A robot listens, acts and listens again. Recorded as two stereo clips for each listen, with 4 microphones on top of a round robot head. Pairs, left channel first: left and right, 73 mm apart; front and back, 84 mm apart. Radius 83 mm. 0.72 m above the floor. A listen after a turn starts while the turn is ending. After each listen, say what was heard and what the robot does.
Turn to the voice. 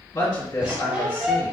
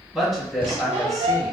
The woman speaking: 95° left. Turn 95° left.
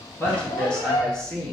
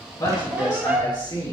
The woman speaking is now 15° left. Turn 15° left.
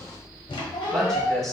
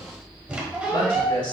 Facing the woman speaking.